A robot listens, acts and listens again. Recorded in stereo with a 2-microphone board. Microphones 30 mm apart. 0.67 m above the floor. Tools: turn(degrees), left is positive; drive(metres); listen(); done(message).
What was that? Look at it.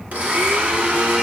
turn(degrees=-60)
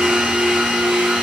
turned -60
turn(degrees=-40)
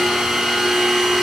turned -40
turn(degrees=-10)
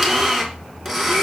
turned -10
done("Facing the blender.")